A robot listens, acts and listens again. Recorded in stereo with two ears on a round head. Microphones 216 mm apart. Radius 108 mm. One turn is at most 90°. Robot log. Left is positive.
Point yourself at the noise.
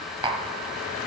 note: The tapping: about 20° right or 160° right.
cmd yaw -20
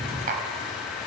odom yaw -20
note: So it is at 140° right.
cmd yaw -90
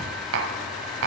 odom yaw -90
note: The tapping is now 65° right.
cmd yaw -65
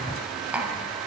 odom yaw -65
end: Facing the tapping, 1 to 2 m away.